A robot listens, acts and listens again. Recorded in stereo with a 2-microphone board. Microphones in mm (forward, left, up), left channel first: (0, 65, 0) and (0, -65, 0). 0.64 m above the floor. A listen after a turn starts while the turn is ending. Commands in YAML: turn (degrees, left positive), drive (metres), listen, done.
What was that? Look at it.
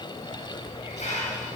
turn: 65
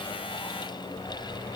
listen: true
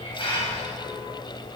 turn: 45
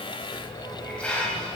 turn: 10
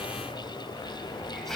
done: "Facing the hiss."